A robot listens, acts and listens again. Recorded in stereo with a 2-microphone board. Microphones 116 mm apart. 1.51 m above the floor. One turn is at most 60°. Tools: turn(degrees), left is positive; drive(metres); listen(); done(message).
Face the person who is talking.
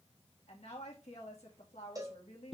turn(degrees=60)
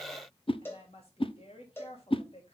turn(degrees=55)
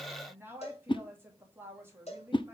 turn(degrees=-20)
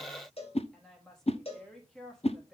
done("Facing the woman speaking.")